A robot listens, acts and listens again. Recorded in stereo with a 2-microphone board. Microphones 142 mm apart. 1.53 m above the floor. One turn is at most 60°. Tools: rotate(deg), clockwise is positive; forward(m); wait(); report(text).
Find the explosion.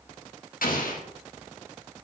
rotate(-60)
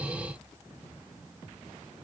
rotate(-30)
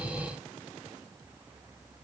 report("Facing where the explosion came from. I can't hear it now.")